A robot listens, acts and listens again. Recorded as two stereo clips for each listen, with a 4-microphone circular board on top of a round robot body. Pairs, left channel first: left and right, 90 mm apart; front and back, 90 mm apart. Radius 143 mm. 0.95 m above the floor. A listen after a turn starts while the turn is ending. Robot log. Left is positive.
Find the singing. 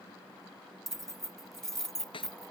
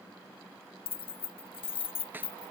cmd idle
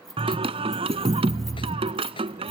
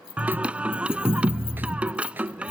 note: The singing: 100° right.
cmd yaw -100
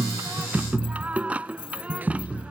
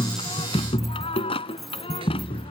note: The singing is now 15° right.
cmd yaw -15
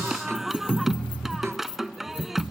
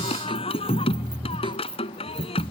end: Facing the singing.